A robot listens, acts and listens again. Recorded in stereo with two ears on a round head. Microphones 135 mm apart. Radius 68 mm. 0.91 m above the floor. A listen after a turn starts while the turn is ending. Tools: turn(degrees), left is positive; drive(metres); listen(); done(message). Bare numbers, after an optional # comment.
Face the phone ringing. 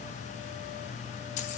listen()
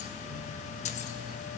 listen()
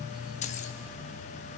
done("I can't make out a phone ringing.")